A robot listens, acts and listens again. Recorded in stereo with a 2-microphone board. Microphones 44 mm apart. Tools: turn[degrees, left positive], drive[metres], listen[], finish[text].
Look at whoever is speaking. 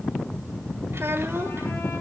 Thought: The child speaking: about 65° right or 115° right.
Action: turn[-65]
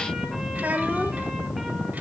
Thought: So it is at 40° right.
Action: turn[-40]
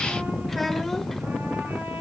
Action: finish[Facing the child speaking, 1 to 2 m away.]